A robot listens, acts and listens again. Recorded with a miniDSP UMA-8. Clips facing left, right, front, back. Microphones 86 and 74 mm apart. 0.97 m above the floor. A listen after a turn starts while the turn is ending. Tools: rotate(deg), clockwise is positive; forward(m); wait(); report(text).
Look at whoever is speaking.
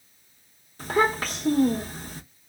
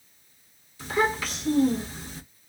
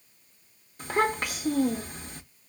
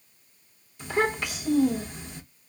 rotate(-45)
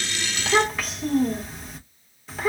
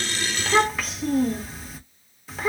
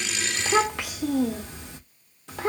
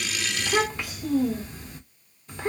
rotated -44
report("Facing the child speaking.")